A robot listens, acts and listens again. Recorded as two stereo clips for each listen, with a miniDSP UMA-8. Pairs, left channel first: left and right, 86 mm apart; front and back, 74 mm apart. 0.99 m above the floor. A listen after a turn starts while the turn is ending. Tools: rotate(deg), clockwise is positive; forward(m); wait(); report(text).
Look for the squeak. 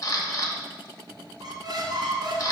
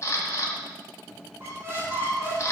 rotate(125)
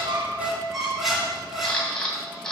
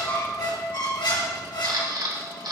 report("Found it: a squeak, straight ahead.")